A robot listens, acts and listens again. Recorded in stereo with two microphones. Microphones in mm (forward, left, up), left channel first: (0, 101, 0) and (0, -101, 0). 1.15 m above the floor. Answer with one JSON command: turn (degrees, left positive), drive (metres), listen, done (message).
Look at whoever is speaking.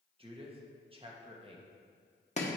{"turn": -25}
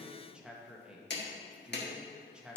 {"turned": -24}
{"done": "Facing the man speaking."}